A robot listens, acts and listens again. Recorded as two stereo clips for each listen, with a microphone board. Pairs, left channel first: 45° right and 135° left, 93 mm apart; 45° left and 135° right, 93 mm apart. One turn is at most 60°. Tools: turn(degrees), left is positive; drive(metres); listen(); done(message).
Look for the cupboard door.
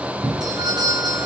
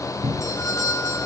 turn(degrees=60)
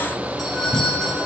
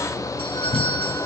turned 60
turn(degrees=60)
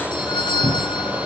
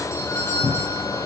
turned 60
turn(degrees=20)
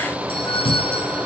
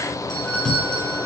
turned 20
done("Facing the cupboard door, 2 to 4 m away.")